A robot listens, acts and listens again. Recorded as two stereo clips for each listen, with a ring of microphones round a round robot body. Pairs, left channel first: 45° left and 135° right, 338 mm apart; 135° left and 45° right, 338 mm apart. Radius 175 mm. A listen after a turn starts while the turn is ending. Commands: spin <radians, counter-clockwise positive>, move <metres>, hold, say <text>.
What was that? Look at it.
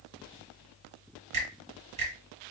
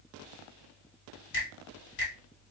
spin 2.79
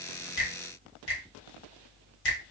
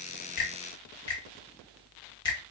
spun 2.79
spin 1.05
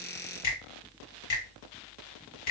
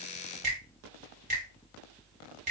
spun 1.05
spin 0.35
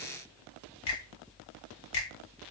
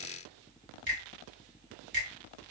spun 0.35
spin 0.17
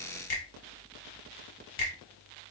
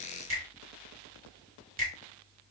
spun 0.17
say Facing the finger snap, 1 to 2 m away.